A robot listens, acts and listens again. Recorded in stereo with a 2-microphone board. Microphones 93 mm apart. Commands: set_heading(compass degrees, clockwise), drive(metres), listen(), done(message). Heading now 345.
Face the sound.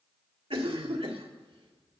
set_heading(75)
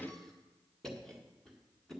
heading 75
done("Facing the cough, 1 to 2 m away.")